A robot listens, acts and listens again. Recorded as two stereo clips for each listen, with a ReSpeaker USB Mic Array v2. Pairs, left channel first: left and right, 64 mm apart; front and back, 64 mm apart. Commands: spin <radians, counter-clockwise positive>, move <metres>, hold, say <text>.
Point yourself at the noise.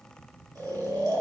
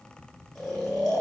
spin -1.48
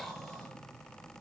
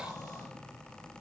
say Found it: snoring, straight ahead.